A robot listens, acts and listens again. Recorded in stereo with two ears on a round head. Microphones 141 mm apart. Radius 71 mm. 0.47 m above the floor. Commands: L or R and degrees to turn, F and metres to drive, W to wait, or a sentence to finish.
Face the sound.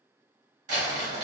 R50
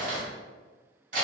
R65
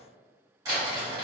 R25
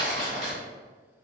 Found it: crumpling, straight ahead, 1 to 2 m away.